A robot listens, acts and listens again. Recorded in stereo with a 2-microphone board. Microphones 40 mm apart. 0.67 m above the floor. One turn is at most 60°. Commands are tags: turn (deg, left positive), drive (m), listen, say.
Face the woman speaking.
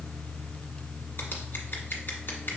<listen/>
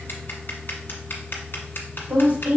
<turn deg="-55"/>
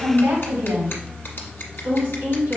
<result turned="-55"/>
<turn deg="-60"/>
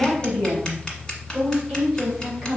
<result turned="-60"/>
<turn deg="-25"/>
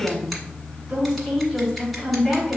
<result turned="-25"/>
<say>Found it: a woman speaking, straight ahead, 2 to 4 m away.</say>